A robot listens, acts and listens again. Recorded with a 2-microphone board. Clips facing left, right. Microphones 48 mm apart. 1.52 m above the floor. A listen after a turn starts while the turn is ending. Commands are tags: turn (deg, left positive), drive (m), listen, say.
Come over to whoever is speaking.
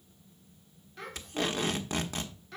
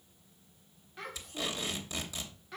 <turn deg="-30"/>
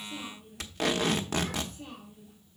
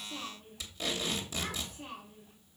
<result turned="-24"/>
<turn deg="-145"/>
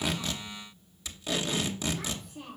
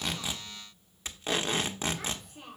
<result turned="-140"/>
<drive m="1.0"/>
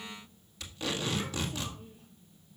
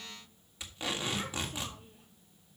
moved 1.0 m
<listen/>
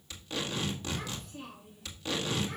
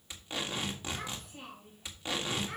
<turn deg="-10"/>
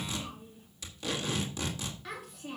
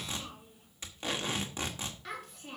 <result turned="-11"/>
<drive m="1.0"/>
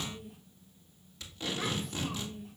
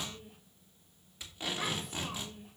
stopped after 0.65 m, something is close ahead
<say>I am next to the child speaking.</say>